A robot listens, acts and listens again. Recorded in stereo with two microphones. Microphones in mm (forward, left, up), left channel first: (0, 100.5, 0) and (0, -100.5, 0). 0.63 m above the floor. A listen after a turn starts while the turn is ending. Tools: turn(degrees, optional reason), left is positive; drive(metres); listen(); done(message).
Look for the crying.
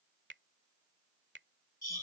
listen()
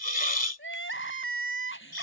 turn(degrees=90)
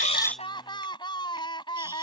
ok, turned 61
turn(degrees=25, reason="So it is at 25° left.")
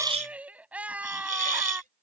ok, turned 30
done("Found it: crying, straight ahead.")